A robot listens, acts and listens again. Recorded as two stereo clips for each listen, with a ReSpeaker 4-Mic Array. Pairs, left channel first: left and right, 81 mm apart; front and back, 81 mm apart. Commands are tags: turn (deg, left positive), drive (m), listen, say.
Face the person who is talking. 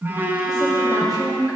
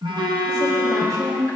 <turn deg="140"/>
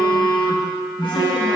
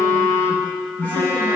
<listen/>
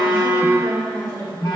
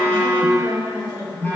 <turn deg="30"/>
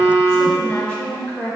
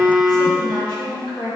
<turn deg="20"/>
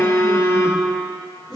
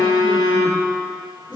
<say>Found it: a woman speaking, straight ahead, 2 to 4 m away.</say>